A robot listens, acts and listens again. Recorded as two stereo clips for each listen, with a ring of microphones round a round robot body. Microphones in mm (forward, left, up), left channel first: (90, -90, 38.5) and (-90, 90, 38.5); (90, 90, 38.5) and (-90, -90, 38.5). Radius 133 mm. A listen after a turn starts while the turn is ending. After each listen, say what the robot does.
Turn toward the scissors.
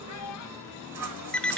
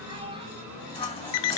Turn 115° left.
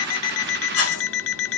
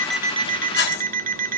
Found it: scissors, straight ahead.